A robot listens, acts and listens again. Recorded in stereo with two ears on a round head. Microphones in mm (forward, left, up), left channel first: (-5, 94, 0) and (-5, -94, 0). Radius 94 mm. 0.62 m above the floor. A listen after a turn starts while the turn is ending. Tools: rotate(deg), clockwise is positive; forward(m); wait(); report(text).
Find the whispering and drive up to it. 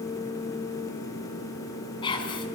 rotate(-25)
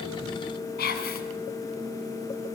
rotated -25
rotate(-130)
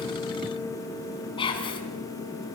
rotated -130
rotate(-25)
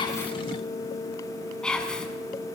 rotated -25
forward(1.0)
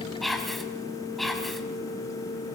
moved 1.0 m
forward(1.0)
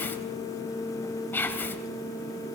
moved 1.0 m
rotate(-10)
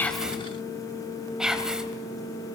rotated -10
forward(1.0)
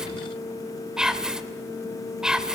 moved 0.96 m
forward(1.0)
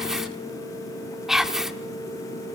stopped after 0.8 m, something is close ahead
report("I am next to the whispering.")